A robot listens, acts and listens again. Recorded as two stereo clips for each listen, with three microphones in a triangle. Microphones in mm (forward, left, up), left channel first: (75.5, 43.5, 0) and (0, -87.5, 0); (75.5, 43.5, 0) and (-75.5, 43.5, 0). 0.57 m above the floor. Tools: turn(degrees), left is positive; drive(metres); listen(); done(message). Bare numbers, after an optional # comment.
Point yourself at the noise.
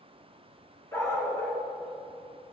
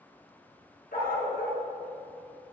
# The dog barking: 10° right.
turn(-10)
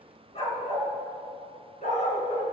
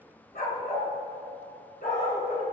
# The dog barking is now 25° left.
turn(25)
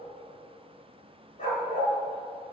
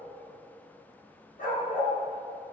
# The dog barking is now 30° left.
turn(30)
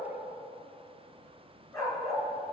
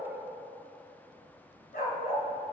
# The dog barking is now 10° right.
turn(-10)
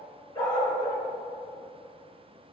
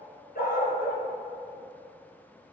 done("Facing the dog barking, 2 to 4 m away.")